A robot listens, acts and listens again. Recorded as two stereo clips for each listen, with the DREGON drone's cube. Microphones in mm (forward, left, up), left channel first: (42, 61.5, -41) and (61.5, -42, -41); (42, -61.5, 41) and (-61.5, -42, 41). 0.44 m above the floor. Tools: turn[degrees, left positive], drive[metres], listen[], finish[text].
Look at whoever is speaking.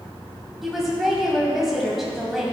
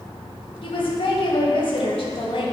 Thought: The woman speaking: 10° left.
Action: turn[10]
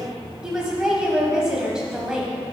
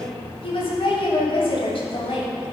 Action: finish[Facing the woman speaking.]